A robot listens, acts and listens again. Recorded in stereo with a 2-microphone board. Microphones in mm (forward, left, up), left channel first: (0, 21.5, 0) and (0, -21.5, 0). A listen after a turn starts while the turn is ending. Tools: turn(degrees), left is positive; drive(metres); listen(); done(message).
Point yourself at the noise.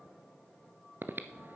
turn(degrees=-60)
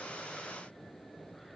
done("Facing the breathing, under 1 m away.")